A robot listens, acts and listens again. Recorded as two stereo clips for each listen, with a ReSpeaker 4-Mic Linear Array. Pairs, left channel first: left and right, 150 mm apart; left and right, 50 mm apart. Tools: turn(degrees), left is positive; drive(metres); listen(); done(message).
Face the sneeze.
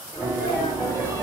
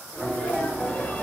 turn(degrees=20)
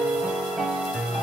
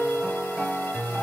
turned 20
listen()
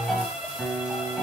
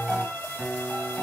done("I heard a sneeze, but can't make it out now. It was about straight ahead or 140° left.")